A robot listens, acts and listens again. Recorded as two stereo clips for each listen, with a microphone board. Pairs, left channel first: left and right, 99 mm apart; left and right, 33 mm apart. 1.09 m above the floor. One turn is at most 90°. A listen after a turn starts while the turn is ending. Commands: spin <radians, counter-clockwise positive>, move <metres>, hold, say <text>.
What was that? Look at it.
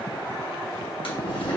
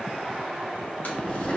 spin 1.05
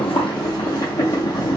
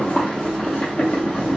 spin 0.79
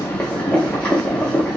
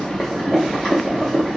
spin 0.26
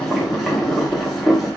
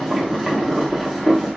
say Facing the boiling.